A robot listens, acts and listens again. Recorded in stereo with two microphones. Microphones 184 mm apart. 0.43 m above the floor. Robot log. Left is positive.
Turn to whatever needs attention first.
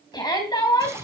note: The shout: about 25° left or 155° left.
cmd yaw +25
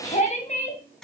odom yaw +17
note: So it is at 140° left.
cmd yaw +140
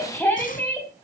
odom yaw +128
note: The shout is now 10° left.
cmd yaw +10
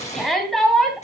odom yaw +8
end: Facing the shout.